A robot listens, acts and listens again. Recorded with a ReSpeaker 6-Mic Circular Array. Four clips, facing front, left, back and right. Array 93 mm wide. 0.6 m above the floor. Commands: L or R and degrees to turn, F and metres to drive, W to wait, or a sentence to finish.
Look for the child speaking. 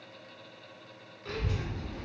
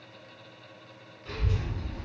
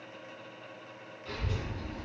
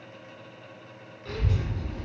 R45
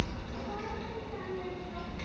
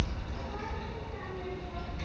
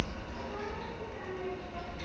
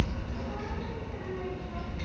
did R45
Facing the child speaking, 1 to 2 m away.